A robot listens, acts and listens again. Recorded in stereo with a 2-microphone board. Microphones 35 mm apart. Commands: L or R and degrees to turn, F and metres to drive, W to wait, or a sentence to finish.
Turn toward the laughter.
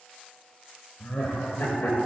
L55
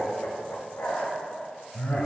L70
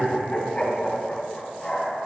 L25
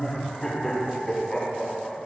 Facing the laughter.